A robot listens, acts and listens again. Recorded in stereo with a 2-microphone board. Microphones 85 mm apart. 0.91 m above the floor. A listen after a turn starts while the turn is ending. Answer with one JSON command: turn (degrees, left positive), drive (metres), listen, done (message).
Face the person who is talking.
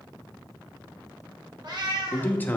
{"turn": 20}
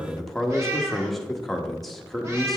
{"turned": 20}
{"done": "Facing the man speaking, 1 to 2 m away."}